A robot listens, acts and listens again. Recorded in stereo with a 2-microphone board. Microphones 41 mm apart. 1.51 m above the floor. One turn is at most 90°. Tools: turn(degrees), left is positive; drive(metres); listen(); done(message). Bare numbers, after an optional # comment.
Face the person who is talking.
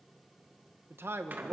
turn(-90)
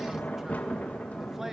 listen()
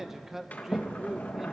# The man speaking is now 10° right.
turn(-10)
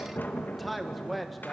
done("Found it: a man speaking, straight ahead, 1 to 2 m away.")